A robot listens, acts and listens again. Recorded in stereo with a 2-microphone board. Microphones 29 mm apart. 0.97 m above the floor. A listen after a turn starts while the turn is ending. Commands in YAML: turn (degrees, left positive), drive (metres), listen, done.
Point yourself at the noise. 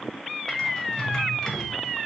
turn: 20
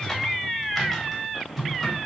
done: "Facing the typing on a keyboard, 1 to 2 m away."